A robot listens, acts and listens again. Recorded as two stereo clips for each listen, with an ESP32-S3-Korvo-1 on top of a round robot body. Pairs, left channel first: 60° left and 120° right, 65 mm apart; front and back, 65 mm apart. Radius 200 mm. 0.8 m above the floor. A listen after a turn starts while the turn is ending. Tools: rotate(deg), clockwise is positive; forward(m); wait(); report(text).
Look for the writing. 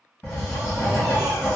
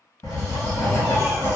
rotate(-10)
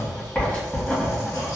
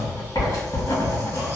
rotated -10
report("Facing the writing, 1 to 2 m away.")